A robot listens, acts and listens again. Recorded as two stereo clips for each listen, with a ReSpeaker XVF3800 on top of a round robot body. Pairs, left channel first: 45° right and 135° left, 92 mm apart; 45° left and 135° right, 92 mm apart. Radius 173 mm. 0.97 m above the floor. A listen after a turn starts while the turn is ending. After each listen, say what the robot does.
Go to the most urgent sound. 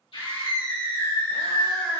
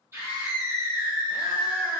Turn 70° right.
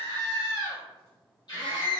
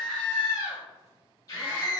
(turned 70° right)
Drive 1.0 m forward.
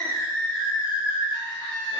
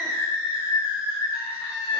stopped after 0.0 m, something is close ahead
Turn 10° right.
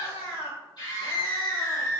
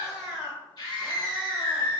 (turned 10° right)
Blocked. The scream is further on, straight ahead.